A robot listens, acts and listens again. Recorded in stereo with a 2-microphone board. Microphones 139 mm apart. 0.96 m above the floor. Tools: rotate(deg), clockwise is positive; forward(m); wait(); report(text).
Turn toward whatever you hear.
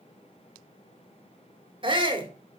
rotate(35)
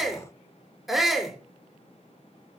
report("Facing the shout.")